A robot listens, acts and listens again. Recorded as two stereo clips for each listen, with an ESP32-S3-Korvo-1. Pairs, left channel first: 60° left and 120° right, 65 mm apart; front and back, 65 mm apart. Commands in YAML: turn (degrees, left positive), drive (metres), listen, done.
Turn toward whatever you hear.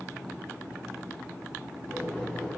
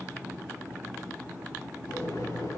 turn: -15
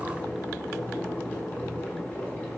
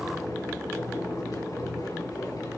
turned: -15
done: "Found it: boiling, straight ahead, over 4 m away."